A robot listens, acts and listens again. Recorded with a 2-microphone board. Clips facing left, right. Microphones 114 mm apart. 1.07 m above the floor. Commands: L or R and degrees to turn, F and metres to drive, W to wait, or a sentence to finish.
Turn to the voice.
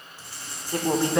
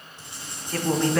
L20
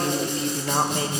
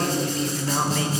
L140
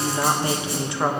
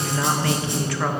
L25
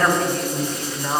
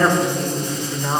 R10
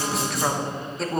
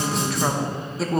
Found it: a woman speaking, straight ahead.